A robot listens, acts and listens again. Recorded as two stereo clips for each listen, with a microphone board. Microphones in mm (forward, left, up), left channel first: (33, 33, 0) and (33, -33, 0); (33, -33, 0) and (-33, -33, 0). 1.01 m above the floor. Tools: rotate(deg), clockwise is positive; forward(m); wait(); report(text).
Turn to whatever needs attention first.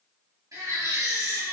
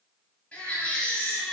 rotate(70)
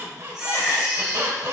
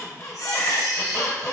rotate(15)
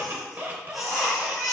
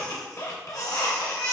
report("Facing the baby crying.")